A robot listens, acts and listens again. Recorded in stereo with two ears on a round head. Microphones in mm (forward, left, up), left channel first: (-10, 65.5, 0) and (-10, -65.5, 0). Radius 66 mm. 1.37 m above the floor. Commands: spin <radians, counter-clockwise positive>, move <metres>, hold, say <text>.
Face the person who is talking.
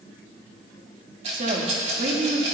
spin -0.96
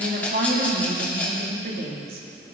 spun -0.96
spin -1.22
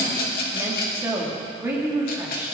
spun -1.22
spin -0.26
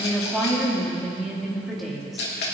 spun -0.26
say Found it: a woman speaking, straight ahead, 2 to 4 m away.